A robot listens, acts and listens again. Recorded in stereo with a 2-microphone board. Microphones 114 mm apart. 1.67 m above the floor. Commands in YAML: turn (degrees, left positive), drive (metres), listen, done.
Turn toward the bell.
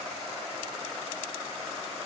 listen: true
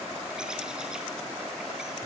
listen: true
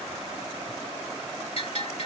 turn: 55
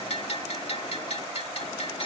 turn: 65
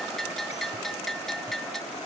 done: "Facing the bell."